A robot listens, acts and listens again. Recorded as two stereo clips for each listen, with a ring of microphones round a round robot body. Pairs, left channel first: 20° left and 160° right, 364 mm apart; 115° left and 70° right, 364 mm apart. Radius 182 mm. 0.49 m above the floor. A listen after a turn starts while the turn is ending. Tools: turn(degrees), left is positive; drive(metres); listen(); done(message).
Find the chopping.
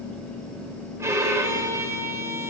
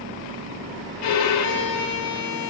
listen()
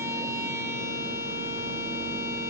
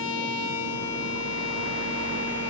listen()
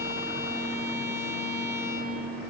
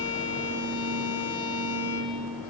done("I can't make out chopping, only a violin.")